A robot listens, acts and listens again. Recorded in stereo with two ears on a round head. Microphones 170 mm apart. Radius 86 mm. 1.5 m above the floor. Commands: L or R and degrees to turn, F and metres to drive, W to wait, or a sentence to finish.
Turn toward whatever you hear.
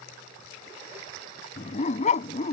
L40
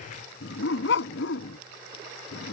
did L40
L105
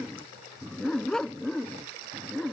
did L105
Facing the dog barking.